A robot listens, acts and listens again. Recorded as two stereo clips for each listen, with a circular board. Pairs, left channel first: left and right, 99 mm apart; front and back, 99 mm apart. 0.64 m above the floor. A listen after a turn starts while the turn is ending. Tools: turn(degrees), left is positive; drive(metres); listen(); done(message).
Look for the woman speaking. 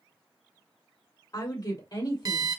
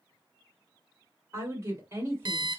turn(degrees=130)
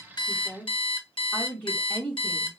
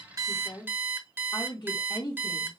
turn(degrees=15)
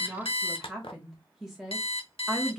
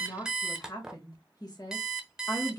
done("Found it: a woman speaking, straight ahead.")